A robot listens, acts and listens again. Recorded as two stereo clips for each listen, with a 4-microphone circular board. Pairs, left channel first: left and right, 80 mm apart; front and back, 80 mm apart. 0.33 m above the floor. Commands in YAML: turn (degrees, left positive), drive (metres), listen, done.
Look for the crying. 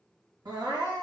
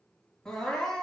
turn: -80
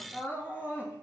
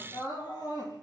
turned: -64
turn: -20
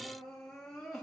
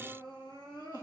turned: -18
done: "Found it: crying, straight ahead."